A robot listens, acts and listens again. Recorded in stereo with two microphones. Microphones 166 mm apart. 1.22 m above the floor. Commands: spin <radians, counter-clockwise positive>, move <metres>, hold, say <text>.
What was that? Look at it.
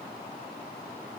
hold
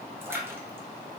spin -0.52
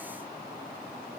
hold
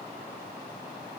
say I heard a splash, but can't make it out now. It was about 15° left or 135° right.